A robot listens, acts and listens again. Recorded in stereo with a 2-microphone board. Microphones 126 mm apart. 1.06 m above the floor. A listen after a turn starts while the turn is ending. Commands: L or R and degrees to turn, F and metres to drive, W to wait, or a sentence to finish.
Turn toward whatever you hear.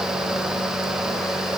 W
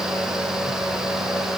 W
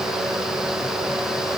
I can't make out anything to turn to.